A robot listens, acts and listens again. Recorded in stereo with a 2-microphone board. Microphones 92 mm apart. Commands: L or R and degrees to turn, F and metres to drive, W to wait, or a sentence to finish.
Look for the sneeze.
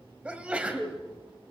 R30
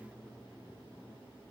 W
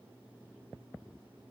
I heard a sneeze, but can't make it out now. It was about 20° left or 140° right.